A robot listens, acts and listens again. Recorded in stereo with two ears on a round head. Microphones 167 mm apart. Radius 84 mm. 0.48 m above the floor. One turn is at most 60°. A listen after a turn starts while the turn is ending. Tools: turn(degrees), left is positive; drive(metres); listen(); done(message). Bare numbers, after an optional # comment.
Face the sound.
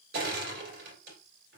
# The crushing: about 60° right or 120° right.
turn(-60)
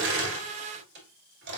# So it is at 65° right.
turn(-60)
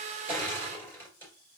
# The crushing is now 10° left.
turn(10)
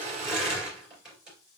done("Facing the crushing.")